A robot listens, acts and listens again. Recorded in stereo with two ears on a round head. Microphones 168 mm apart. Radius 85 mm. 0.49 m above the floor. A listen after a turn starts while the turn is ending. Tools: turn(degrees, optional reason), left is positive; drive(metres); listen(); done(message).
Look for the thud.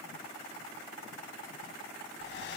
listen()
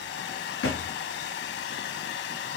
turn(degrees=90)
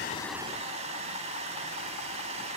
done("I heard a thud from this way, but can't make it out now.")